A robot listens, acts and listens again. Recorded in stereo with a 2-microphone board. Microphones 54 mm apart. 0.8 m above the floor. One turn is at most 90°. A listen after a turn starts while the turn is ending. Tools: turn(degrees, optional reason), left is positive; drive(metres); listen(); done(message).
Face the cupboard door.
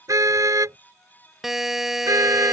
listen()
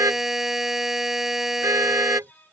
listen()
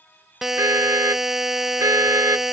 done("I can't make out a cupboard door, only a car horn and a buzzer.")